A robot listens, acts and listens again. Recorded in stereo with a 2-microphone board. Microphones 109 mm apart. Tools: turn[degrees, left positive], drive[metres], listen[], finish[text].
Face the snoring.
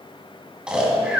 Action: turn[-30]
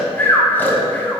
Thought: So it is at 20° left.
Action: turn[20]
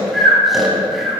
Action: finish[Facing the snoring.]